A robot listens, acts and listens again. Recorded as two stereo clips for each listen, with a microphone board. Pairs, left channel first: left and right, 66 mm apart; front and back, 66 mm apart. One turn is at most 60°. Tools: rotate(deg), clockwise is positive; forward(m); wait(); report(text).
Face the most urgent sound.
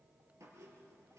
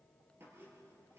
wait()
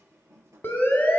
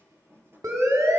rotate(-60)
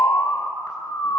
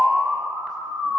rotate(-60)
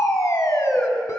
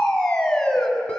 rotate(-60)
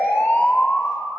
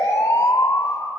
rotate(-30)
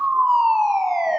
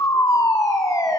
report("Found it: a siren, straight ahead, 2 to 4 m away.")